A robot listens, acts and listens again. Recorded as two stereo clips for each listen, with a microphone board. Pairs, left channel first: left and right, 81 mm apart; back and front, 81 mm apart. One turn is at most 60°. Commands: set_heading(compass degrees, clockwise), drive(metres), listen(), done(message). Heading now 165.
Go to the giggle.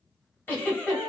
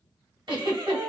set_heading(140)
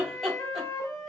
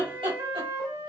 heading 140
drive(1.0)
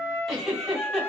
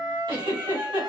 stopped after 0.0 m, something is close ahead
done("Something is in my way. I am facing the giggle but have not reached it.")